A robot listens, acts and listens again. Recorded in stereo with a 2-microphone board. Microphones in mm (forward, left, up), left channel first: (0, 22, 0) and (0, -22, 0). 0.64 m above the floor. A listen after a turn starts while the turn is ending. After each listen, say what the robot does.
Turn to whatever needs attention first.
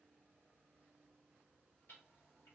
Keep listening.
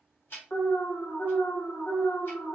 Turn 70° left.
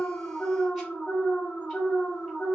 Turn 40° left.
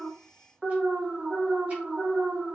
Facing the alarm.